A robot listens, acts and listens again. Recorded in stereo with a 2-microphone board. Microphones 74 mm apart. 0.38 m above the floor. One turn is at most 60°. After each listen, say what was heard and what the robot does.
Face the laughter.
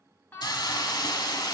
The laughter: about 25° left or 155° left. Turn 25° left.
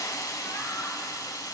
Keep listening.
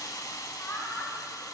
The laughter: about 20° left or 160° left. Turn 20° left.
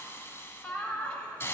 The laughter: about 20° left or 160° left. Turn 20° left.
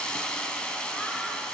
Keep listening.
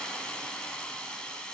Keep listening.
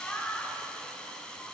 Turn 30° left.
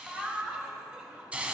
So it is at 15° right. Turn 15° right.
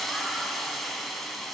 Keep listening.
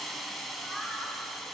Facing the laughter, 2 to 4 m away.